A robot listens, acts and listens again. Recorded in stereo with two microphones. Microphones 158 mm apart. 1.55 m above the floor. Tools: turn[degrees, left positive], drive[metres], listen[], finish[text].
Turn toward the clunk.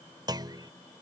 Thought: The clunk: about 25° right or 155° right.
Action: turn[-25]
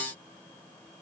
Action: listen[]
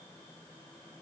Action: finish[I heard a clunk, but can't make it out now. It was about straight ahead or 130° right.]